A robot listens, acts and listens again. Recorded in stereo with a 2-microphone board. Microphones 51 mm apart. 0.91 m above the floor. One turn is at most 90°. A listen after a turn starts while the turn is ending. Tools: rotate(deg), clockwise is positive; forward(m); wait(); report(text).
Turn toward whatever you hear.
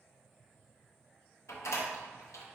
rotate(-65)
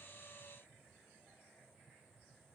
wait()
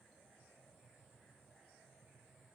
report("I heard a door slam, but can't make it out now. It was about straight ahead or 50° left.")